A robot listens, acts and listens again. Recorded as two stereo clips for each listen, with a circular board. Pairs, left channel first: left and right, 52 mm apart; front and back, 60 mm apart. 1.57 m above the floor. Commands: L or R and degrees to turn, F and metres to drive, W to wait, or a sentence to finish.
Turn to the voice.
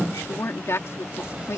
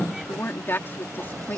L55
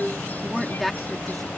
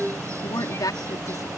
Found it: a woman speaking, straight ahead.